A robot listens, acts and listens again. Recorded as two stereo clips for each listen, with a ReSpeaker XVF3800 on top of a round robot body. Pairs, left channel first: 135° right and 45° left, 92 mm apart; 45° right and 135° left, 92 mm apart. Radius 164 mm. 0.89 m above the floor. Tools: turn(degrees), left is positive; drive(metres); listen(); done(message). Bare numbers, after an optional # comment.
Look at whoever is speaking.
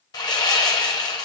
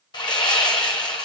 listen()
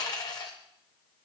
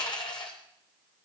listen()
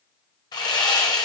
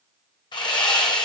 done("I can't make out anyone speaking to turn to.")